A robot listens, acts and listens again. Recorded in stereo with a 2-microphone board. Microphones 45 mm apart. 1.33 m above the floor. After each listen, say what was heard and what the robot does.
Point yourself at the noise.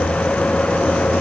Keep listening.
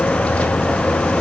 Keep listening.
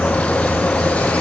I can't make out anything to turn to.